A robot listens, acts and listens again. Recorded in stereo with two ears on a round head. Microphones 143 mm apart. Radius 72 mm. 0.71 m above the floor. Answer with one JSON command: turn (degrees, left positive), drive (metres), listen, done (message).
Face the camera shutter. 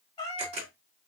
{"turn": -40}
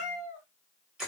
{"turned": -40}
{"done": "Found it: a camera shutter, straight ahead."}